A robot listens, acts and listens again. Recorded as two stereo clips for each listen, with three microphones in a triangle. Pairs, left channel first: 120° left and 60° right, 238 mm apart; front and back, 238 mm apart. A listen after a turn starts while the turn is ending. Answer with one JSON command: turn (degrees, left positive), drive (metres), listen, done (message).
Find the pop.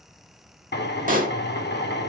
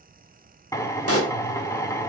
{"turn": -10}
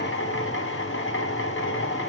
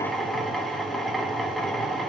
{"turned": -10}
{"done": "I heard a pop from this way, but can't make it out now."}